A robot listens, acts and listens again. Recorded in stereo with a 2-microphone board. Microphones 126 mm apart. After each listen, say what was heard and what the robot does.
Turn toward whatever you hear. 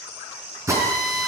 The drill: about 25° right or 155° right. Turn 25° right.
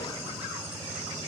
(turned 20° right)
Keep listening.
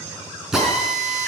Found it: a drill, straight ahead, 2 to 4 m away.